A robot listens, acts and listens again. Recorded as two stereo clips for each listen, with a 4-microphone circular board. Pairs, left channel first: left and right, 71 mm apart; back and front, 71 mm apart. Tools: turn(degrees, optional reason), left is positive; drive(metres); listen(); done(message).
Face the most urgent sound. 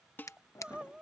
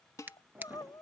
turn(degrees=-165, reason="The crying: 165° right.")
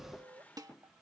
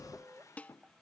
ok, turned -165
turn(degrees=-70, reason="The crying is now 70° right.")
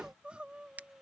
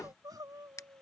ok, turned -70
turn(degrees=-15, reason="The crying is now 15° right.")
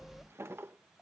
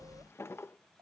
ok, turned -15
listen()
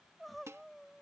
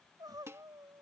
done("Found it: crying, straight ahead.")